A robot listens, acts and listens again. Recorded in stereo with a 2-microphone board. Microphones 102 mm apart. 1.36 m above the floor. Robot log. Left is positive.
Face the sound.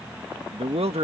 note: The man speaking: about 75° right or 105° right.
cmd yaw -75
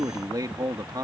note: So it is at 45° right.
cmd yaw -45
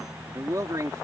note: The man speaking is now 35° right.
cmd yaw -35
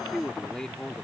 end: Found it: a man speaking, straight ahead.